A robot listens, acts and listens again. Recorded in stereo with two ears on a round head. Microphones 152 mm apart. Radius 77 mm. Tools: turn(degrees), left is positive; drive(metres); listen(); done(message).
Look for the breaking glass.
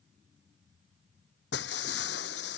turn(degrees=70)
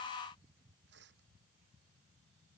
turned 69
listen()
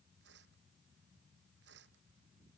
done("I heard breaking glass, but can't make it out now. It was about straight ahead or 40° left.")